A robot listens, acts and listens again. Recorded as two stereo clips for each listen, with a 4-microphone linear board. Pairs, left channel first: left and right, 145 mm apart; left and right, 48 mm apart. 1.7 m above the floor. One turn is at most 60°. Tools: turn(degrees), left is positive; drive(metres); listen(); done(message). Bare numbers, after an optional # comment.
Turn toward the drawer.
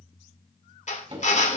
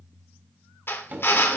# The drawer: about 35° right or 145° right.
turn(-35)
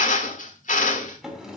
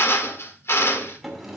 done("Facing the drawer, 2 to 4 m away.")